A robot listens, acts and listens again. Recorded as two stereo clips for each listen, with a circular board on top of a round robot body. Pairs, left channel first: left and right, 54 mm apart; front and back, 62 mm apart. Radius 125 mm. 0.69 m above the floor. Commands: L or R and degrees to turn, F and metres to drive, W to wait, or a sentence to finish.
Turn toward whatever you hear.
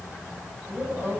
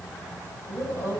R40
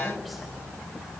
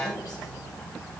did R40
W
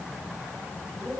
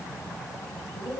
W
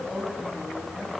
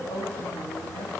Found it: a woman speaking, straight ahead.